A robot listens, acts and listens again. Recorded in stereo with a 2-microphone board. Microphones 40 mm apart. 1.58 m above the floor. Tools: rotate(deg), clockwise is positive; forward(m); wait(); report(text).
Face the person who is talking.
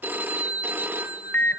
wait()
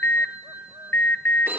wait()
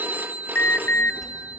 rotate(-30)
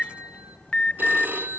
rotate(-140)
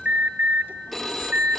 wait()
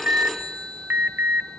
rotate(-60)
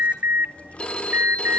rotate(-35)
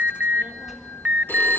rotate(10)
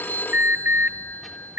report("Facing the child speaking.")